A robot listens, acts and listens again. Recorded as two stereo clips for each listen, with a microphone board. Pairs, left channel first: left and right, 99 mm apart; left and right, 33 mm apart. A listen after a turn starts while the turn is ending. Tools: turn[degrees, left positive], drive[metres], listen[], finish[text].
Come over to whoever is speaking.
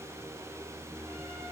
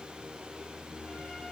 Action: listen[]
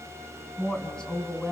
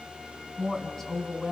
Action: turn[30]
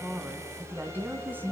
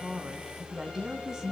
Thought: So it is at 20° right.
Action: turn[-20]
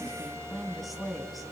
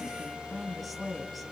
Action: drive[1.0]
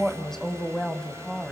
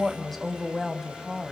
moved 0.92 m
Action: drive[1.0]
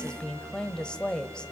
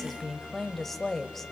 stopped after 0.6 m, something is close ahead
Thought: The woman speaking is now 15° left.
Action: turn[15]
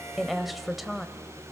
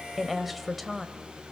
Action: finish[Arrived at the woman speaking, straight ahead.]